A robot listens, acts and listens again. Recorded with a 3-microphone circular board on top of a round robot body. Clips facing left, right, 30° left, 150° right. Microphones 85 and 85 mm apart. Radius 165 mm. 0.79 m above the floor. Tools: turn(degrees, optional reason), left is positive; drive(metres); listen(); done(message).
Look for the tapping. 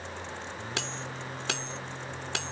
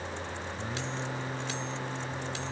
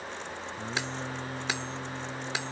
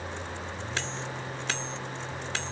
listen()
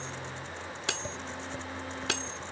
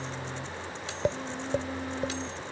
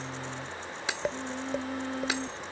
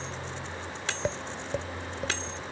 turn(degrees=-55, reason="The tapping: 55° right.")
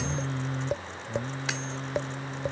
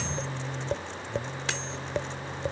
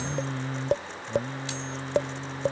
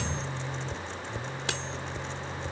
done("Facing the tapping.")